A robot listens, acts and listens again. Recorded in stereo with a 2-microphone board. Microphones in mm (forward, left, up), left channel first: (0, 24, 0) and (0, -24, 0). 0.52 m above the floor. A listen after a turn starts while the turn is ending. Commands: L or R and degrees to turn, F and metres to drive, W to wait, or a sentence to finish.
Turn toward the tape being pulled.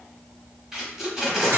R30
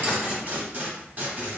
R140
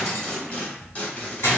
L30
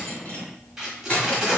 Facing the tape being pulled, under 1 m away.